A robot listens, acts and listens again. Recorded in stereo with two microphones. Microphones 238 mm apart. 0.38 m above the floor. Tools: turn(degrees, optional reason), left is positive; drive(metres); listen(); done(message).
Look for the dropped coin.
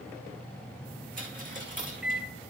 turn(degrees=-35, reason="The dropped coin: about 35° right or 145° right.")
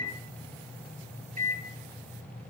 listen()
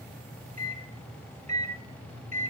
done("I heard a dropped coin, but can't make it out now. It was about straight ahead or 110° right.")